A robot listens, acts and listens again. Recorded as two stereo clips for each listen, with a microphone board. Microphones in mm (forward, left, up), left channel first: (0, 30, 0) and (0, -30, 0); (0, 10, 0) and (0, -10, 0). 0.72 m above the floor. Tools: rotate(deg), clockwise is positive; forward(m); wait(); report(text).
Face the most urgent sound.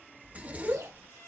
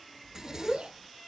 rotate(60)
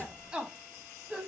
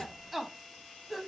rotate(20)
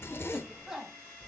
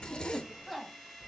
report("Found it: a shout, straight ahead, 1 to 2 m away.")